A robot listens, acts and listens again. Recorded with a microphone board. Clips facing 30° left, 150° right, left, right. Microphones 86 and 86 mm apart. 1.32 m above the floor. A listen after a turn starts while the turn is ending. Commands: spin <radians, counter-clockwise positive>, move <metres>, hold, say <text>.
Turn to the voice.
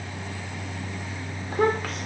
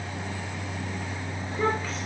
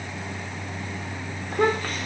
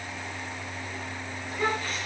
spin 0.87
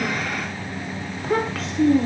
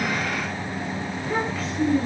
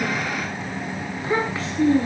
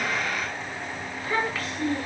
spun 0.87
spin 0.44
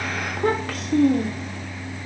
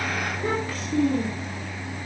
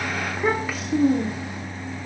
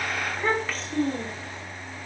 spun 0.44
spin 0.17
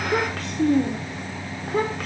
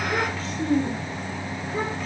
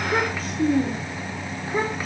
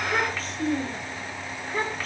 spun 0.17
spin 0.17
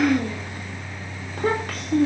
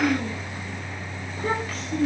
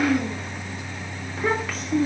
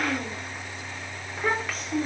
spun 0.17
say Found it: a child speaking, straight ahead, 2 to 4 m away.